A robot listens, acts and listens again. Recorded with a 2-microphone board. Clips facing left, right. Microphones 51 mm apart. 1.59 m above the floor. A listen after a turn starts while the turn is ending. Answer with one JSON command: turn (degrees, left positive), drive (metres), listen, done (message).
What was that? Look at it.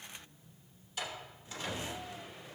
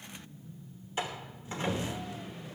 {"turn": -30}
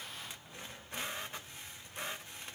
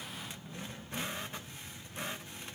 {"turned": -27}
{"listen": true}
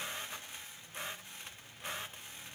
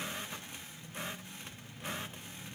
{"done": "I heard a door slam, but can't make it out now. It was about 5° right or 125° right."}